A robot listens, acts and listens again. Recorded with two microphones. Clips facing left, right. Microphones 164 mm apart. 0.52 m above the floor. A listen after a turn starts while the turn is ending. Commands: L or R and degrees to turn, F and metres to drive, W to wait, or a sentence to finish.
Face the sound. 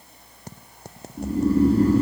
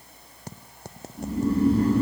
L40
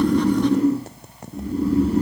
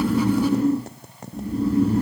Facing the snoring, 1 to 2 m away.